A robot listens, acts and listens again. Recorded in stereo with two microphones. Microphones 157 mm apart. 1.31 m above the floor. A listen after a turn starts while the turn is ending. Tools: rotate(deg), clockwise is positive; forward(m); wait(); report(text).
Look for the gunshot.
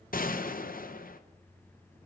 rotate(-65)
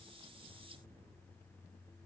wait()
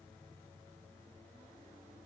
report("I heard a gunshot, but can't make it out now. It was about straight ahead or 50° left.")